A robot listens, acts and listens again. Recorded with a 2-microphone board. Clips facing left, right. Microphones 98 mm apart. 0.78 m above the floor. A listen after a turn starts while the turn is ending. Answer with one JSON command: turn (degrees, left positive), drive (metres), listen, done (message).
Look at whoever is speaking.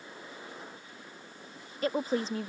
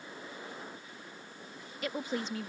{"turn": 35}
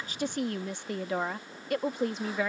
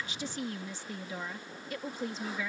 {"turn": 100}
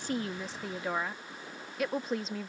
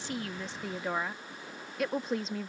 {"done": "Facing the woman speaking."}